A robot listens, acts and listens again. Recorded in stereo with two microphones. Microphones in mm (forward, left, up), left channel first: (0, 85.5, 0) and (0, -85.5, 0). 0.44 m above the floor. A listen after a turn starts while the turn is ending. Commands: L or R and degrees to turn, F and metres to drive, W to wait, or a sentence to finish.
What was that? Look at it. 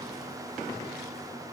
W
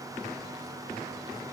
W
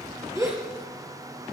R20
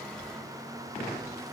W
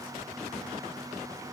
I heard a gasp, but can't make it out now. It was about straight ahead or 140° right.